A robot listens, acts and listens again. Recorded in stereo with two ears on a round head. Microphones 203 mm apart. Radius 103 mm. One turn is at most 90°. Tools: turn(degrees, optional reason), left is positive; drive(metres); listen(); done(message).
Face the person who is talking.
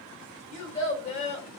turn(degrees=30, reason="The child speaking: about 30° left or 150° left.")
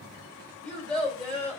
done("Facing the child speaking, 2 to 4 m away.")